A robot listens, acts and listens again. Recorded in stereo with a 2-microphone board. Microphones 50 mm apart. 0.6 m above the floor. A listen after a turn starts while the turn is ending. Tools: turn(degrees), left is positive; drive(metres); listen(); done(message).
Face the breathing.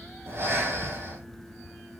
turn(degrees=-50)
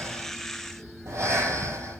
turn(degrees=-80)
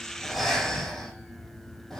done("Found it: breathing, straight ahead, over 4 m away.")